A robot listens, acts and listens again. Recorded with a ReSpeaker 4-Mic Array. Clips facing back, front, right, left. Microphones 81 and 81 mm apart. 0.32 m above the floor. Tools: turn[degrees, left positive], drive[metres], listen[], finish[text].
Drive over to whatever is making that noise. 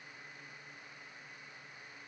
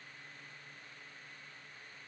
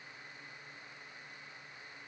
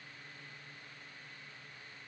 Action: listen[]
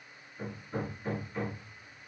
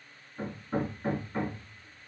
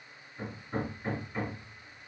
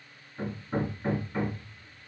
Thought: The hammering: 40° left.
Action: turn[40]
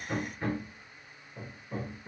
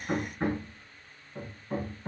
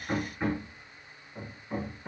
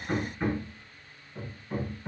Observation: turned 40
Action: drive[1.0]
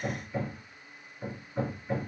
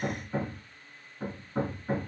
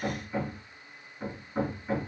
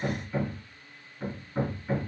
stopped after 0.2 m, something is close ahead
Action: finish[Something is in my way. I am facing the hammering but have not reached it.]